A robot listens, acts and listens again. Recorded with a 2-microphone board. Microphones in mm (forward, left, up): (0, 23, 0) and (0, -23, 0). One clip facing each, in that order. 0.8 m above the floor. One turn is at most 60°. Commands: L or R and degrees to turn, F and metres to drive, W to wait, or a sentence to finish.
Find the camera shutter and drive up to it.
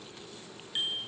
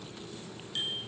W
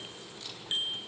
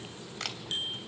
R60
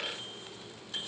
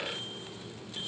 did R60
W
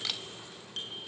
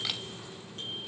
W
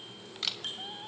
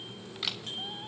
F1.0
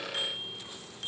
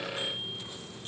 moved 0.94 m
W
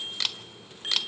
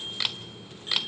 R10
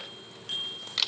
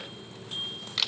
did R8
F1.0
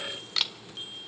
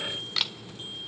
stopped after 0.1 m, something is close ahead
Arrived at the camera shutter, straight ahead.